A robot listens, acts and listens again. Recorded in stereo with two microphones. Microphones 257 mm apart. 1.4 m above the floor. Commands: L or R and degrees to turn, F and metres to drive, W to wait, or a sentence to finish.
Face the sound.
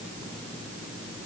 W
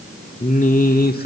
L40
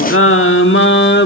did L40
L45
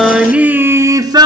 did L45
R20
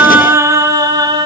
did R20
R15
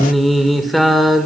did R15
Found it: singing, straight ahead.